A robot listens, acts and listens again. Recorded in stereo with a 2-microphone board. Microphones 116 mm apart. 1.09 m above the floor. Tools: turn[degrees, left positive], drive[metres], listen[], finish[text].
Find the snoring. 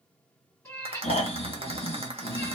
Thought: The snoring: about 55° left or 125° left.
Action: turn[55]
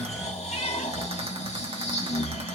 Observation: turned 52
Thought: So it is at 75° left.
Action: turn[75]
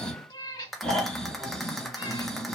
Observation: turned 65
Action: finish[Found it: snoring, straight ahead, 1 to 2 m away.]